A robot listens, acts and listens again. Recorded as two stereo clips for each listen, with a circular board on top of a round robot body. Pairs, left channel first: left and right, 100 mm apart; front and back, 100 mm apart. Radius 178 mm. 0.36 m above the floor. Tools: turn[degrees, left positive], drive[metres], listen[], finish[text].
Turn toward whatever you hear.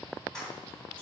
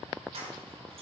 Thought: The keys jangling: 170° left.
Action: turn[170]
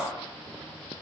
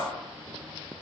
Thought: The keys jangling is now 15° right.
Action: turn[-15]
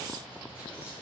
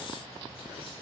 Action: listen[]
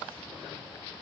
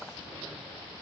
Action: listen[]
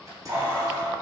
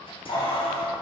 Thought: The keys jangling is now 30° right.
Action: turn[-30]
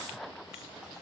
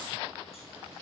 Action: listen[]
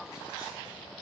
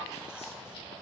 Action: listen[]
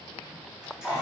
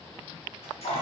Action: finish[Facing the keys jangling.]